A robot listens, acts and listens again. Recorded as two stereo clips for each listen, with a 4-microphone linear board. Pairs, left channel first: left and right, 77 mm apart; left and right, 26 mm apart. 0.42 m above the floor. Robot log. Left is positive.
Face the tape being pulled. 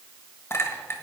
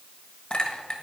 cmd idle
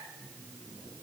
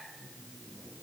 note: The tape being pulled: about 55° left or 125° left.
cmd yaw +55
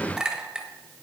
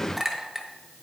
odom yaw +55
cmd idle
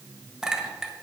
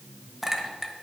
note: So it is at 75° left.
cmd yaw +75
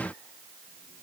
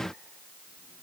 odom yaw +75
cmd idle
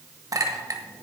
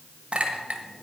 note: The tape being pulled is now 20° left.
cmd yaw +20
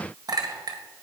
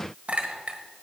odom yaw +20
cmd idle
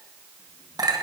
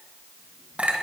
cmd idle
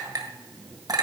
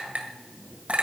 end: Facing the tape being pulled.